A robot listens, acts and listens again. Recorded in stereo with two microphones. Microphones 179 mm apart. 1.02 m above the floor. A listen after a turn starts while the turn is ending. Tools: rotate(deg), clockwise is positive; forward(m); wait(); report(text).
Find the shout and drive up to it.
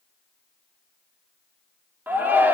rotate(30)
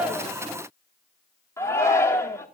rotate(-15)
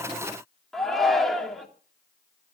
forward(1.0)
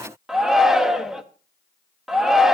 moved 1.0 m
forward(1.0)
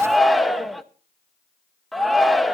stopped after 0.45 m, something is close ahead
report("I am next to the shout.")